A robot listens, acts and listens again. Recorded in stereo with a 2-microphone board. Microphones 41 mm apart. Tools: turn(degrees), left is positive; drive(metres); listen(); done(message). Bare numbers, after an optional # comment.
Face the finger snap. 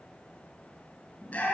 listen()
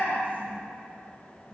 listen()
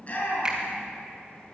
# The finger snap: about 20° right or 160° right.
turn(-20)
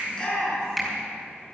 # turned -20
done("Facing the finger snap.")